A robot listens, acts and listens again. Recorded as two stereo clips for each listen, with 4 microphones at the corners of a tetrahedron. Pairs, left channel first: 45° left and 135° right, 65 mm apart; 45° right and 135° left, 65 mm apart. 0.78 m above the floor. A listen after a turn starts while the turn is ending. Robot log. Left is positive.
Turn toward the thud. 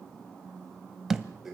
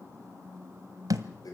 note: The thud: 145° left.
cmd yaw +145
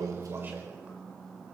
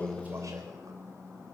end: I heard a thud from this way, but can't make it out now.